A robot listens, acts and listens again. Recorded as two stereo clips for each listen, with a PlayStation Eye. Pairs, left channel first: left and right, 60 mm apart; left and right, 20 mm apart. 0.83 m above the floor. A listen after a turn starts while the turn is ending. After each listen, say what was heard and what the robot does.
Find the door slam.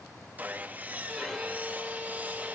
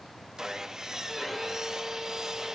Keep listening.
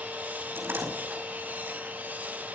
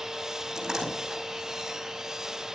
The door slam: about 35° right or 145° right. Turn 35° right.
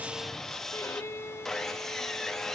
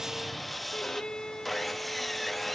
Keep listening.
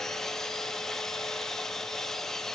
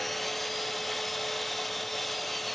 I heard a door slam, but can't make it out now. It was about straight ahead or 110° right.